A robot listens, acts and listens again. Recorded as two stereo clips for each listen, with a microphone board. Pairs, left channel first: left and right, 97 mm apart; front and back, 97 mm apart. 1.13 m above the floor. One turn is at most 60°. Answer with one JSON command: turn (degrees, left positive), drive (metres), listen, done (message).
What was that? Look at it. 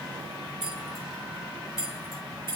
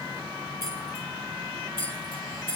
{"turn": 30}
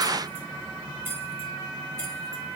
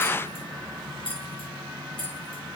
{"turn": -30}
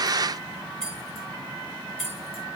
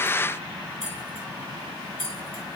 {"done": "Facing the keys jangling."}